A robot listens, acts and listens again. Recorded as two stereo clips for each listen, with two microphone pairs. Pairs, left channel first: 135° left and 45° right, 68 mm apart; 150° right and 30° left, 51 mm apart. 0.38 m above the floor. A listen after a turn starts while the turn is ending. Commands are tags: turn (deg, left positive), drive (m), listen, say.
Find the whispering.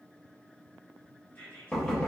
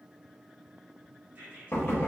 <turn deg="75"/>
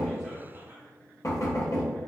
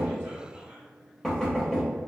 <listen/>
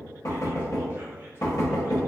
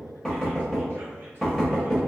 <listen/>
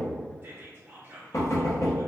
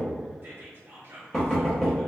<say>Facing the whispering, 1 to 2 m away.</say>